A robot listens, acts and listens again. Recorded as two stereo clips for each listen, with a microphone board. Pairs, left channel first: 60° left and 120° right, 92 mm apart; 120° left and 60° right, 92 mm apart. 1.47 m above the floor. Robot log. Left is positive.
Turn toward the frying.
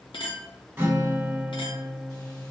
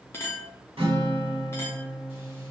cmd idle
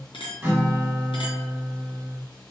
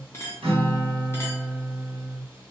cmd idle
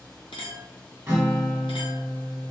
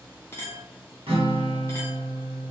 end: I can't make out frying to turn to.